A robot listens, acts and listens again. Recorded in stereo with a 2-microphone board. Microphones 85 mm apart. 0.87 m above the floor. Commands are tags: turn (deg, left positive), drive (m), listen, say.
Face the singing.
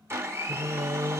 <turn deg="-50"/>
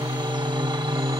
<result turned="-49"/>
<say>Facing the singing.</say>